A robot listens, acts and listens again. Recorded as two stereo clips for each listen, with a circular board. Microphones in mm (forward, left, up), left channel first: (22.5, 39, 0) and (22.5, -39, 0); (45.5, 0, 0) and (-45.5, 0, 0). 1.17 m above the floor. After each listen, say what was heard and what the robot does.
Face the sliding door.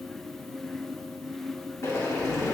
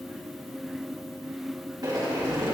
The sliding door: 140° left. Turn 140° left.
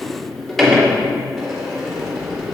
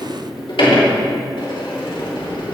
Found it: a sliding door, straight ahead.